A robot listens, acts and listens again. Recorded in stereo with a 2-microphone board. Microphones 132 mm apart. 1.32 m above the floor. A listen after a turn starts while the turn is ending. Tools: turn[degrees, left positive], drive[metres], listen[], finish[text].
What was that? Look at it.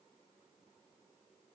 Action: listen[]
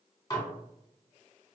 Thought: The dishes clattering: about 25° left or 155° left.
Action: turn[25]
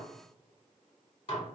Thought: So it is at 130° left.
Action: turn[130]
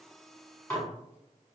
Thought: The dishes clattering is now 20° left.
Action: turn[20]
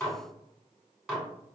Action: finish[Found it: dishes clattering, straight ahead.]